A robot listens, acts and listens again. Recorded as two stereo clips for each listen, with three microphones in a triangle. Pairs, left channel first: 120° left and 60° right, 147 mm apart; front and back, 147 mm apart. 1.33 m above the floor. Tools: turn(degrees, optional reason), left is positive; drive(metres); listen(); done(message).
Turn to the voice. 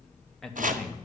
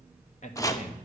turn(degrees=35, reason="The man speaking: 35° left.")
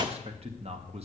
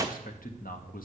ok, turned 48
turn(degrees=-15, reason="The man speaking is now 15° right.")
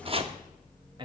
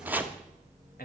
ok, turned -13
done("Found it: a man speaking, straight ahead, 1 to 2 m away.")